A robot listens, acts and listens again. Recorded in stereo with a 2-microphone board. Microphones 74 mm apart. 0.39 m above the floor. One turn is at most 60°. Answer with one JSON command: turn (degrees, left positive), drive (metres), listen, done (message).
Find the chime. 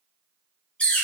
{"listen": true}
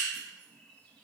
{"listen": true}
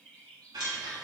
{"turn": -60}
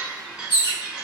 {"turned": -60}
{"turn": -15}
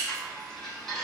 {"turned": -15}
{"done": "Facing the chime."}